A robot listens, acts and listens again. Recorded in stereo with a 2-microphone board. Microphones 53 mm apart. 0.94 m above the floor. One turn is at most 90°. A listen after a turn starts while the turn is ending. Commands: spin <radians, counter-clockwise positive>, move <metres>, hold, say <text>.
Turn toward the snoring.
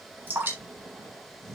spin -1.22
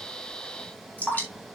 hold
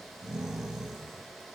say Facing the snoring, over 4 m away.